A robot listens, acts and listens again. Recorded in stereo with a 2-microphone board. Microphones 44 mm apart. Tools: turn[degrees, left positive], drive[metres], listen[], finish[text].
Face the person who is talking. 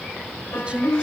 Thought: The woman speaking: about 25° right or 155° right.
Action: turn[-25]
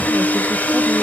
Action: listen[]
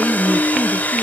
Action: listen[]
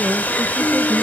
Action: finish[I heard a woman speaking, but can't make it out now. It was about straight ahead or 130° right.]